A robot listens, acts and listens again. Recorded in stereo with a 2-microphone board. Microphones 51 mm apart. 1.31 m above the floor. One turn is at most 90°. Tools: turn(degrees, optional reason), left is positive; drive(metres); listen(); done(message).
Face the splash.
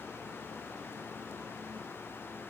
listen()
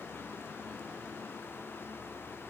listen()
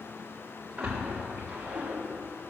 turn(degrees=-15, reason="The splash: about 15° right or 165° right.")
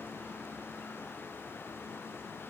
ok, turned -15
listen()
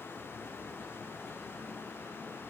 done("I heard a splash, but can't make it out now. It was about straight ahead or 150° right.")